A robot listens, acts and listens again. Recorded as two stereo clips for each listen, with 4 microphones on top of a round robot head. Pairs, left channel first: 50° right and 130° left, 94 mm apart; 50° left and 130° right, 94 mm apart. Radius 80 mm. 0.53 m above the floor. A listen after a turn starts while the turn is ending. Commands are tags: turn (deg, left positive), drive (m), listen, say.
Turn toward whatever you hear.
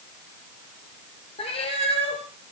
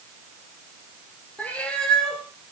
<turn deg="-35"/>
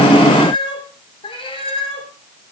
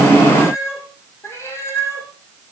<turn deg="-20"/>
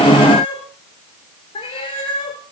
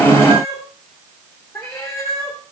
<turn deg="-15"/>
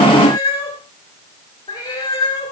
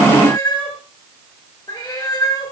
<say>Found it: a cat meowing, straight ahead.</say>